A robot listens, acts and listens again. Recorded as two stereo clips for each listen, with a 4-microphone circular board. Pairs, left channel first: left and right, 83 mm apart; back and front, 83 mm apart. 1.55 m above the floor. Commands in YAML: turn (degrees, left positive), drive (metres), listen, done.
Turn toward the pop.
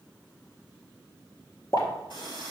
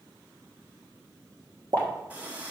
turn: 40
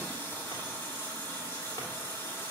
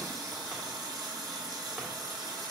done: "I heard a pop from this way, but can't make it out now."